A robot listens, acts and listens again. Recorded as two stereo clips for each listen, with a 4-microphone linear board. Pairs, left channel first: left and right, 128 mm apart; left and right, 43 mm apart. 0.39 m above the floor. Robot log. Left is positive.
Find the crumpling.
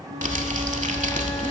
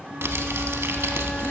cmd yaw -90
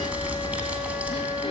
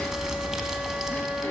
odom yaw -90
note: So it is at 10° right.
cmd yaw -10
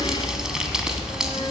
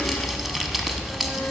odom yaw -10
end: Found it: crumpling, straight ahead.